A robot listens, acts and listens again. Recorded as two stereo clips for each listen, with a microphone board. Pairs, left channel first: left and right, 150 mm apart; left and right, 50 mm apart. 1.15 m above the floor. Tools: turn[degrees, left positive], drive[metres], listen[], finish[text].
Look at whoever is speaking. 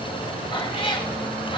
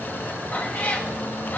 Action: listen[]
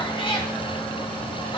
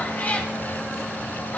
Action: listen[]
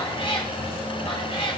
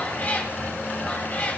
Action: finish[I can't make out anyone speaking, only a cat meowing.]